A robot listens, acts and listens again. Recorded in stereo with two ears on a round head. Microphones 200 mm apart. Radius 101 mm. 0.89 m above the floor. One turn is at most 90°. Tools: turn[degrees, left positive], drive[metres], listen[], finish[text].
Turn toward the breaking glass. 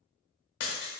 Action: turn[90]
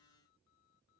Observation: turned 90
Action: finish[I heard breaking glass from this way, but can't make it out now.]